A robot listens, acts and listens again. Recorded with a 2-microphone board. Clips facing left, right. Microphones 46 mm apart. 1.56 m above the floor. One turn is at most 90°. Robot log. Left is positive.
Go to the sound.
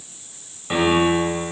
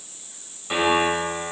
cmd yaw +30
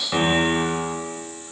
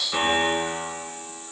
note: So it is at 135° left.
cmd yaw +90
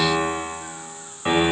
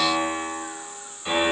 note: The piano is now 45° left.
cmd yaw +45
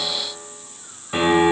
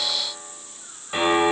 cmd fwd 1.0
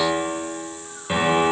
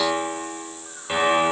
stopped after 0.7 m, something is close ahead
end: Arrived at the piano, straight ahead.